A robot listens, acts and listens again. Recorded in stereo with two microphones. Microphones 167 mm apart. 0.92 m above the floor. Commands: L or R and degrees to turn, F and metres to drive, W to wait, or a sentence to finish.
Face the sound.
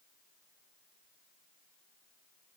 W
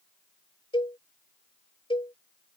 L30
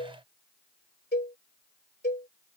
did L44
L105
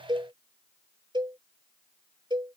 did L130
R30
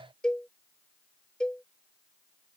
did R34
Found it: a cowbell, straight ahead.